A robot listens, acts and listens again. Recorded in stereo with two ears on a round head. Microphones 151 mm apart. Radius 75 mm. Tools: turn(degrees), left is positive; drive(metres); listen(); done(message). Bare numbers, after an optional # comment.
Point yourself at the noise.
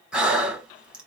turn(-30)
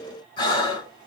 # So it is at 25° left.
turn(25)
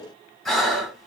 done("Facing the breathing, 1 to 2 m away.")